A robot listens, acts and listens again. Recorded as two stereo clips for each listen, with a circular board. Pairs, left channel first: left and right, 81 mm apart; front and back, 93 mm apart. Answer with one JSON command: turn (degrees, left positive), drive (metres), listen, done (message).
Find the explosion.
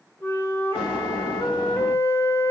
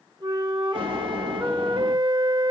{"turn": -165}
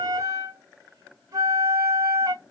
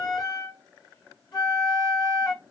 {"done": "I heard an explosion from this way, but can't make it out now."}